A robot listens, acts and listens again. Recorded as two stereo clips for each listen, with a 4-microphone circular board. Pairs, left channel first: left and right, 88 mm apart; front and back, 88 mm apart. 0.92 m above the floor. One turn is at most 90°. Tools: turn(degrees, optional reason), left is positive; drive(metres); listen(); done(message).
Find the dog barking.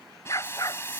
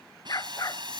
turn(degrees=40, reason="The dog barking: 40° left.")
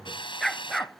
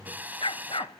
done("Found it: a dog barking, straight ahead.")